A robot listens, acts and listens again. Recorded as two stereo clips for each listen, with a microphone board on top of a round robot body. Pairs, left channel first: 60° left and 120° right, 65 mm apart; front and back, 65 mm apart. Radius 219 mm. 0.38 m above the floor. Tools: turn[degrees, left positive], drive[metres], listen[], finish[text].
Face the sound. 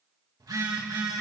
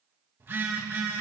Thought: The phone buzzing: 125° right.
Action: turn[-125]
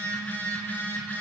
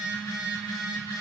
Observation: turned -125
Action: finish[Found it: a phone buzzing, straight ahead, 2 to 4 m away.]